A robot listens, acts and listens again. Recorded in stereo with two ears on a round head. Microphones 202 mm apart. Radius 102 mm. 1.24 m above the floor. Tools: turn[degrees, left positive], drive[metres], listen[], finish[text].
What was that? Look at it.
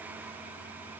Action: listen[]
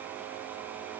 Action: listen[]
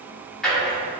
Action: turn[30]
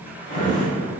Thought: So it is at 145° left.
Action: turn[145]
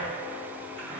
Action: listen[]
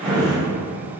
Action: finish[Found it: a drawer, straight ahead, 1 to 2 m away.]